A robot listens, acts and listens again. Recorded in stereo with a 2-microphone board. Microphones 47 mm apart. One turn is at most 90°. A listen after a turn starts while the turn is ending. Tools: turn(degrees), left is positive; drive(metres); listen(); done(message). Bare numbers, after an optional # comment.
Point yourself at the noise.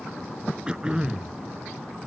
# The throat clearing: about 15° right or 165° right.
turn(-15)
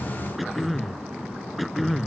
done("Facing the throat clearing.")